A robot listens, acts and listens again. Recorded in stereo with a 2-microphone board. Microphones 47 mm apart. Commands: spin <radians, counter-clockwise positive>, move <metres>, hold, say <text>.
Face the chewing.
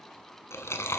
spin 1.57
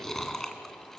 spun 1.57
spin 0.17
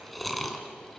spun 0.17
say Facing the chewing.